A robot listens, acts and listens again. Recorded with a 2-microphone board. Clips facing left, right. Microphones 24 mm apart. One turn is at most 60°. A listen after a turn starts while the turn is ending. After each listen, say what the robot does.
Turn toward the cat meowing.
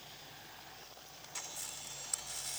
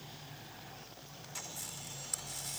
Keep listening.
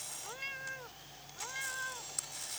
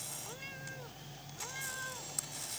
Turn 30° left.
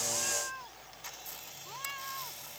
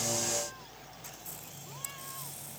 Turn 60° left.
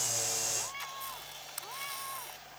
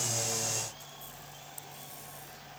Turn 60° left.
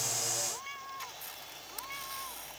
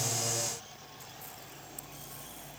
Turn 60° left.
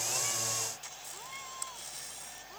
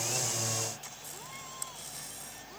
Turn 10° left.
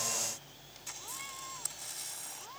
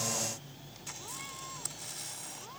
Keep listening.
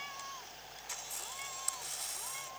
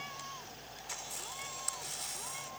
Facing the cat meowing.